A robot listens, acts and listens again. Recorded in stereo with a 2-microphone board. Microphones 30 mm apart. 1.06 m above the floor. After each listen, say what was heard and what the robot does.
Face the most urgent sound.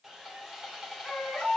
The baby crying: about 30° left or 150° left. Turn 30° left.
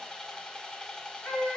So it is at 120° left. Turn 120° left.
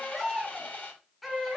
Found it: a baby crying, straight ahead.